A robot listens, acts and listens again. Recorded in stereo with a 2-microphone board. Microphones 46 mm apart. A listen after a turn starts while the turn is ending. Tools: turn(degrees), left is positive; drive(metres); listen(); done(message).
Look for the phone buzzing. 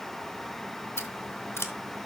listen()
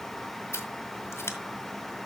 listen()
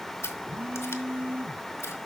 turn(degrees=-40)
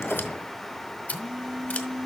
turn(degrees=-10)
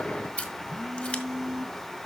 done("Found it: a phone buzzing, straight ahead.")